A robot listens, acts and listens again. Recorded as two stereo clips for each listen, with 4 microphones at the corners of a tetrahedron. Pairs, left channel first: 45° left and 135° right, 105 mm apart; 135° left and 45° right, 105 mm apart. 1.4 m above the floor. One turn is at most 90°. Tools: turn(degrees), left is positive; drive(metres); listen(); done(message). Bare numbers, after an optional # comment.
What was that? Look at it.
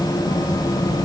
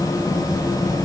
listen()
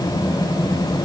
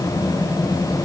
listen()
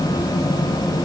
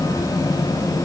done("I can't make out anything to turn to.")